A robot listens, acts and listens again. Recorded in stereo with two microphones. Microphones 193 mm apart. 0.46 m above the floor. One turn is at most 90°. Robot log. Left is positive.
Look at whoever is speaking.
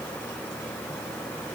cmd idle
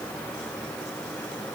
cmd idle
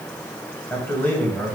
cmd yaw +30
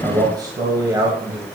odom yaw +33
note: So it is at 20° right.
cmd yaw -20
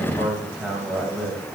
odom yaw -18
end: Found it: a man speaking, straight ahead.